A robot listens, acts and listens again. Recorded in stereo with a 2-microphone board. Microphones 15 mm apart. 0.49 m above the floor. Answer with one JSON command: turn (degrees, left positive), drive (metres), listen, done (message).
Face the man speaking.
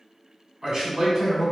{"turn": -35}
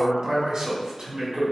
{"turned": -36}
{"turn": -100}
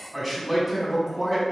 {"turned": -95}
{"done": "Found it: a man speaking, straight ahead."}